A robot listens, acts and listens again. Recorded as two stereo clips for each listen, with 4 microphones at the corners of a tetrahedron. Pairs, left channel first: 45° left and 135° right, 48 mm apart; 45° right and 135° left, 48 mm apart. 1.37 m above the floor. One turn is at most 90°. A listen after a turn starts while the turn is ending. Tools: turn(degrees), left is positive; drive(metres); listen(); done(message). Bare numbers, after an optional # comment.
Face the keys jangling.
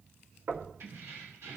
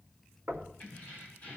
# The keys jangling: 110° right.
turn(-90)
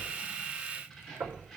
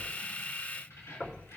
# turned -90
# The keys jangling is now 40° right.
turn(-40)
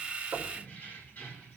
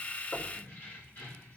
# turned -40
# The keys jangling is now 10° right.
turn(-10)
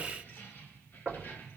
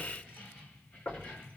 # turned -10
done("Facing the keys jangling.")